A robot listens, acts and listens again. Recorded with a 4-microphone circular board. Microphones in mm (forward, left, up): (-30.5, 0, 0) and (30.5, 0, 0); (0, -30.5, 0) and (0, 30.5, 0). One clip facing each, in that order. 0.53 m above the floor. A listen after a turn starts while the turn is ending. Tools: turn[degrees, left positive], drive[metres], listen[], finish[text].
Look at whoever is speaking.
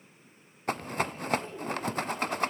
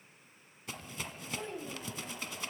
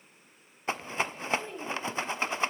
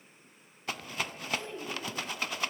Thought: The child speaking: 20° right.
Action: turn[-20]
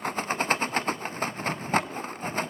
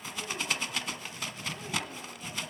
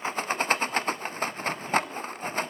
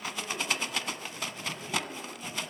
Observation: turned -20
Action: listen[]
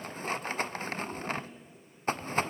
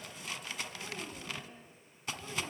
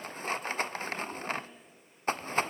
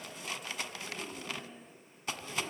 Action: finish[Found it: a child speaking, straight ahead, 2 to 4 m away.]